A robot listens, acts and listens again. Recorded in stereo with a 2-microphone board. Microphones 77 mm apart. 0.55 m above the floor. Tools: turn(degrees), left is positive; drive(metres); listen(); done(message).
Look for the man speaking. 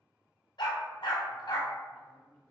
turn(degrees=30)
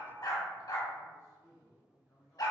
turn(degrees=135)
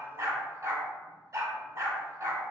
listen()
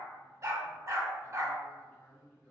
turn(degrees=35)
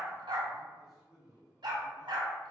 turn(degrees=-10)
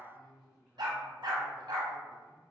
done("Found it: a man speaking, straight ahead, 1 to 2 m away.")